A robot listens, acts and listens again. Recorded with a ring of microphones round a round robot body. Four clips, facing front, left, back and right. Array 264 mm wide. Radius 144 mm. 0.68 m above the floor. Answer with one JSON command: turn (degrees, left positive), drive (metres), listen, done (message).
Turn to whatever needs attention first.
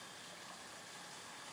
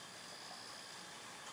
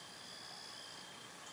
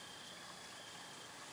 {"listen": true}
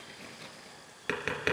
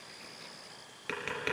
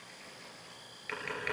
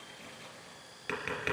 {"listen": true}
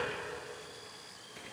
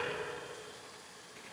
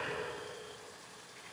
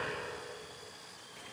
{"done": "I can't make out anything urgent, only tapping."}